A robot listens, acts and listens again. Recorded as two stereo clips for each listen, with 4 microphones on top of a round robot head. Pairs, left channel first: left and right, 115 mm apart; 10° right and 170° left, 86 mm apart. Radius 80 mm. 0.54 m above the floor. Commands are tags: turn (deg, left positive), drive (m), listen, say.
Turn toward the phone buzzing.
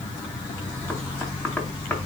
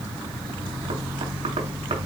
<listen/>
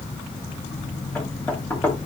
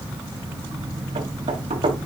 <listen/>
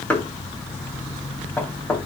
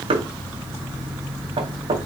<say>I can't make out a phone buzzing to turn to.</say>